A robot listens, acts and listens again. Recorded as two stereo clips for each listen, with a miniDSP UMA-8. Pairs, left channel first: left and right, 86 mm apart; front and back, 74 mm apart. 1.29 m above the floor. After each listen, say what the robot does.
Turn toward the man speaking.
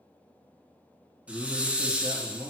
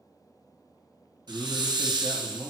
Turn 125° right.
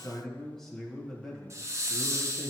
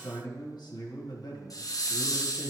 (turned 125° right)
Facing the man speaking.